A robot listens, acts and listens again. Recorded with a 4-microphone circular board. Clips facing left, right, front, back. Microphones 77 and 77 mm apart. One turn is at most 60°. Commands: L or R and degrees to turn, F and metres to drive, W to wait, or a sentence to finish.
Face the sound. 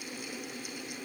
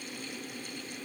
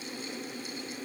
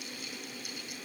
W
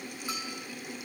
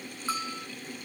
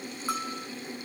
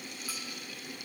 R30
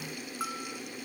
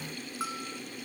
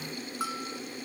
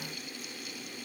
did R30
Facing the bell.